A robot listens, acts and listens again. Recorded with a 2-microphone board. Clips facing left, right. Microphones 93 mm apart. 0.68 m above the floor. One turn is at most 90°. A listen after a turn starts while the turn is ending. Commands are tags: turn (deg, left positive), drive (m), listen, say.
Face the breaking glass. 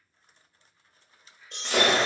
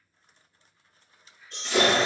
<turn deg="65"/>
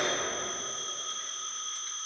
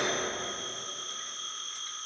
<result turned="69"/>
<listen/>
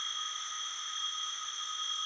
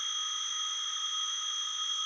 <say>I heard breaking glass, but can't make it out now. It was about 5° right or 45° left.</say>